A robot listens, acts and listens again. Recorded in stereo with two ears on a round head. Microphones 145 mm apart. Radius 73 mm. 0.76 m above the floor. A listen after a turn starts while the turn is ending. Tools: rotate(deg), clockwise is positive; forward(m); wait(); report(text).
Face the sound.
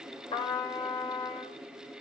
rotate(-30)
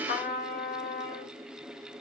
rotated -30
rotate(-120)
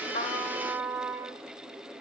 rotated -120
rotate(15)
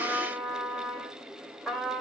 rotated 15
report("Found it: a trumpet, straight ahead, 2 to 4 m away.")